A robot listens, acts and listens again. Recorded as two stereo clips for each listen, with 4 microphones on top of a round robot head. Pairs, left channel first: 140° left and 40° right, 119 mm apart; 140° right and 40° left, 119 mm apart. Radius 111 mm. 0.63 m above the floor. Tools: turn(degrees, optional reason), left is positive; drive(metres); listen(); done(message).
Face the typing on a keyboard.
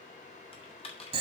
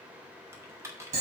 turn(degrees=105, reason="The typing on a keyboard: 105° left.")
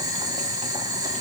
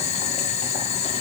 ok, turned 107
listen()
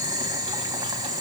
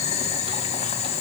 listen()
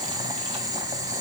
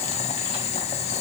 done("Facing where the typing on a keyboard came from. I can't hear it now.")